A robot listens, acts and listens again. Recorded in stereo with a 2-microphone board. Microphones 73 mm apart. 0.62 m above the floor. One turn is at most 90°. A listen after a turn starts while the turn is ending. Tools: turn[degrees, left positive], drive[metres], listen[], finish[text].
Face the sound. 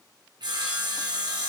Action: turn[-90]
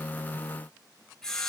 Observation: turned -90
Action: finish[Facing the sawing, 2 to 4 m away.]